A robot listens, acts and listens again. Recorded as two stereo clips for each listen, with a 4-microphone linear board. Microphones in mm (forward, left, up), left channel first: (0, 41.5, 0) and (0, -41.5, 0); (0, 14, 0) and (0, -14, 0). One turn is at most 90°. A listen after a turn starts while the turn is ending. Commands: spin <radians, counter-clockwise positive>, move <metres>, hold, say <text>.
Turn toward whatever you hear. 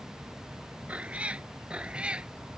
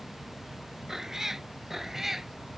spin -0.52
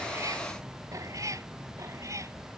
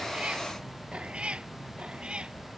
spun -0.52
spin -1.57
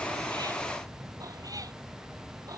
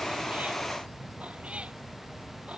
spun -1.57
spin -0.79
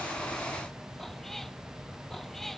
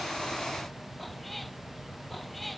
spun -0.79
say Facing the cat meowing.